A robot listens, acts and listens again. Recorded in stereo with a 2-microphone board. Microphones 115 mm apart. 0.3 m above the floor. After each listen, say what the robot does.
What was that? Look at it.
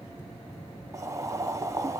Turn 30° right.
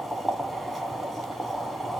Facing the boiling.